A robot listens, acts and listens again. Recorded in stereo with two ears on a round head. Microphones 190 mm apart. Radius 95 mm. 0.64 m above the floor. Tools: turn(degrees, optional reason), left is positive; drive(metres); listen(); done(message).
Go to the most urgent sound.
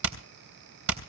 listen()
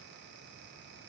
listen()
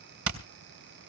done("I can't make out anything urgent, only hammering.")